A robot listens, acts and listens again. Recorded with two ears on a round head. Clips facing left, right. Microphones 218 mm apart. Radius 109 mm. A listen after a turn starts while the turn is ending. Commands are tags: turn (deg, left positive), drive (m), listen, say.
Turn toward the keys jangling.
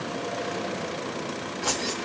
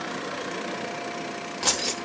<turn deg="-50"/>
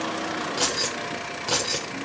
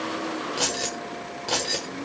<turn deg="10"/>
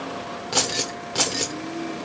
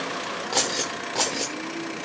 <turn deg="20"/>
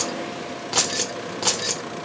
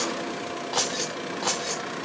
<turn deg="40"/>
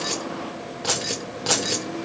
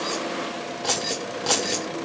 <say>Facing the keys jangling, 1 to 2 m away.</say>